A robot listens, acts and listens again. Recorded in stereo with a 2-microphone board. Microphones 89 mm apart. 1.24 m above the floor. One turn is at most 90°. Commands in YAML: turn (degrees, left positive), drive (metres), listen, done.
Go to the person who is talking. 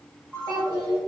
turn: -55
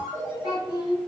turn: -70
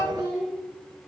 turn: 10
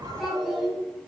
drive: 1.0
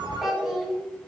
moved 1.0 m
drive: 1.0
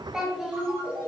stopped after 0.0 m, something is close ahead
done: "I am next to the child speaking."